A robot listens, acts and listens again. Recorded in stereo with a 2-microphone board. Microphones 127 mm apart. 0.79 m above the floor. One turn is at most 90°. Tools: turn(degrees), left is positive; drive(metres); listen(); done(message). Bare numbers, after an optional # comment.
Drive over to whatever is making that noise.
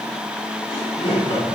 # The laughter: about 50° left or 130° left.
turn(50)
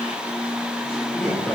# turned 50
drive(1.0)
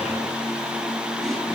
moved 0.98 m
listen()
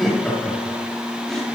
drive(1.0)
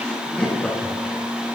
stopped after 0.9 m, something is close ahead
# The laughter is now 10° left.
turn(10)
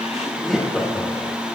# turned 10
done("Arrived at the laughter, straight ahead.")